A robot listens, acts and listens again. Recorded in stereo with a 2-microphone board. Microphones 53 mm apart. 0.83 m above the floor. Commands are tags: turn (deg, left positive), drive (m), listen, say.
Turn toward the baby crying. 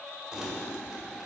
<listen/>
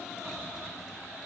<listen/>
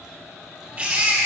<turn deg="-30"/>
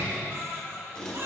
<turn deg="-120"/>
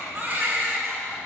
<turn deg="-40"/>
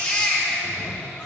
<turn deg="20"/>
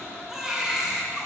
<say>Facing the baby crying.</say>